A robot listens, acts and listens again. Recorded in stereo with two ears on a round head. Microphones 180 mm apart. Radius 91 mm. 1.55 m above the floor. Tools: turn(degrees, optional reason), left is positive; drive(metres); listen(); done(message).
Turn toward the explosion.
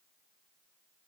listen()
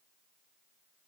listen()
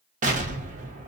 turn(degrees=-40, reason="The explosion: about 40° right or 140° right.")
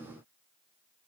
listen()
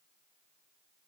done("I heard an explosion, but can't make it out now. It was about straight ahead or 100° right.")